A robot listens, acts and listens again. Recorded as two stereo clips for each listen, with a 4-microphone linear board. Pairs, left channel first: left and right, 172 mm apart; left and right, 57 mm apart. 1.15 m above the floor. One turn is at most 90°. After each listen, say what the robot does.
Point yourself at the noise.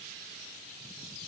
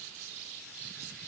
Keep listening.
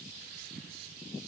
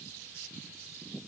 Keep listening.
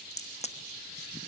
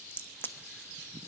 Turn 40° left.
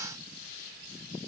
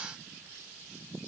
Keep listening.
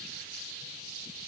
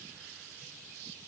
I heard a crack, but can't make it out now. It was about straight ahead or 100° left.